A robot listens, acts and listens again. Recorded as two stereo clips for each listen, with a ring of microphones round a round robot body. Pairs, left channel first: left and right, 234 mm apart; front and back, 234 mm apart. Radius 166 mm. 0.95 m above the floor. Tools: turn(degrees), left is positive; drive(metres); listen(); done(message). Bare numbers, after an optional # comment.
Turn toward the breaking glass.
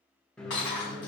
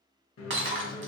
# The breaking glass: 145° left.
turn(145)
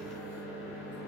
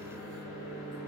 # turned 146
done("Facing where the breaking glass came from. I can't hear it now.")